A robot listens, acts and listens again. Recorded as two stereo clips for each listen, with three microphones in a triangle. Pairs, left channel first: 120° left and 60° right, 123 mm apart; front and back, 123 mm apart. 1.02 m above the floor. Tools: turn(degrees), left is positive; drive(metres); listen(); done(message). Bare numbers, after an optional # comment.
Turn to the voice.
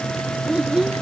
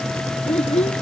# The child speaking: 25° left.
turn(25)
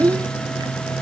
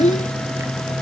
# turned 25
done("Facing the child speaking.")